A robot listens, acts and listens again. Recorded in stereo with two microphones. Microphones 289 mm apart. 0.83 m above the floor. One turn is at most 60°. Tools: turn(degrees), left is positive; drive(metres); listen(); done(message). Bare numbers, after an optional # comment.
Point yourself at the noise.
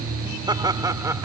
turn(-30)
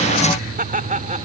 # So it is at 155° right.
turn(-60)
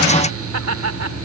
# The laughter is now 115° right.
turn(-60)
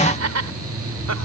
# The laughter is now 65° right.
turn(-60)
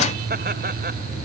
listen()
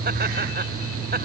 listen()
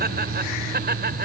# The laughter is now 35° right.
turn(-35)
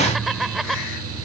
done("Facing the laughter.")